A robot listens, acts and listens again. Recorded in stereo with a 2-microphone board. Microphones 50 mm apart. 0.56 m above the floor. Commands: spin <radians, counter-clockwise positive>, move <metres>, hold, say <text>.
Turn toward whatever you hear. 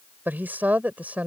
spin -0.52
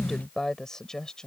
spin 0.26
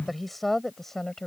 spin 0.17
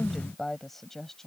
say Found it: a woman speaking, straight ahead.